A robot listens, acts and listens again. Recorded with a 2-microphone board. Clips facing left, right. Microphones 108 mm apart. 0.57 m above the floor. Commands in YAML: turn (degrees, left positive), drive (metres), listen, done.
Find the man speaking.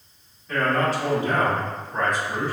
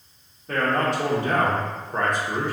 turn: -50
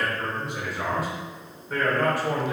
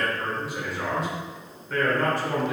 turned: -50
turn: 15
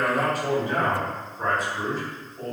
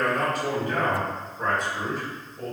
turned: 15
done: "Found it: a man speaking, straight ahead, 2 to 4 m away."